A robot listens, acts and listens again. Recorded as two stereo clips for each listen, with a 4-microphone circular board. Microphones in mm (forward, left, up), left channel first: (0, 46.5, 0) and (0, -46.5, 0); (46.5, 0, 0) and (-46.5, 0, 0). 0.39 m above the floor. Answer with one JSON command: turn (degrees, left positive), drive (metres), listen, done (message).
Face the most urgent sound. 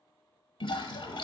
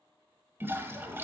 {"listen": true}
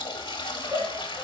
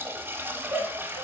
{"turn": -110}
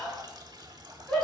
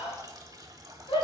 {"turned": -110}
{"done": "Found it: a shout, straight ahead, 2 to 4 m away."}